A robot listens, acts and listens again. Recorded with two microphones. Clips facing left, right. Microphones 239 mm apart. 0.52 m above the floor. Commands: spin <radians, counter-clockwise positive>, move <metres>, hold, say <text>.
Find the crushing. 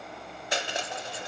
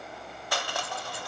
spin 0.35
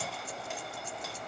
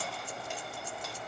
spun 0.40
hold
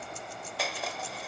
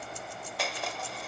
say Found it: crushing, straight ahead, under 1 m away.